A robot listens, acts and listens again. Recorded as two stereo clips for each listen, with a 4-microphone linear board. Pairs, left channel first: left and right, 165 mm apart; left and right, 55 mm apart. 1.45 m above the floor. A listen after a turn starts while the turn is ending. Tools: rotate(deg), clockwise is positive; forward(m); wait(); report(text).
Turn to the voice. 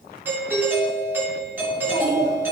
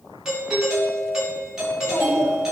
rotate(-30)
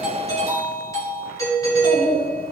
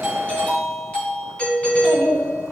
rotate(-115)
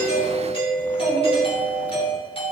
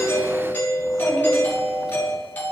rotate(10)
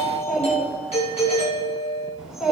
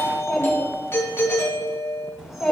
report("Found it: a child speaking, straight ahead, over 4 m away.")